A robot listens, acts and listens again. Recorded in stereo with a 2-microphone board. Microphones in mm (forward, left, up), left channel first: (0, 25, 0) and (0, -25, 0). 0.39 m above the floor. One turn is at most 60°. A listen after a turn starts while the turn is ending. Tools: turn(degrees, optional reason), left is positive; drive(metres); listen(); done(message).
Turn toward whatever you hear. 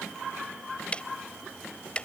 turn(degrees=25, reason="The ticking: about 25° left or 155° left.")
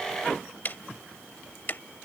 turn(degrees=60, reason="So it is at 130° left.")
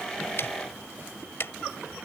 turn(degrees=60, reason="The ticking is now 70° left.")
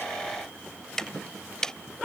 turn(degrees=15, reason="The ticking is now 15° left.")
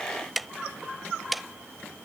done("Facing the ticking.")